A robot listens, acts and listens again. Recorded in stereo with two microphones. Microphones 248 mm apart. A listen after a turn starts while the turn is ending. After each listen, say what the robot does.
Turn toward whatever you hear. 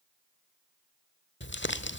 Turn 50° left.
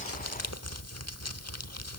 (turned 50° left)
Turn 80° left.
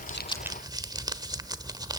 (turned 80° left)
Turn 15° right.
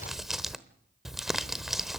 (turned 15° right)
Found it: crumpling, straight ahead, 1 to 2 m away.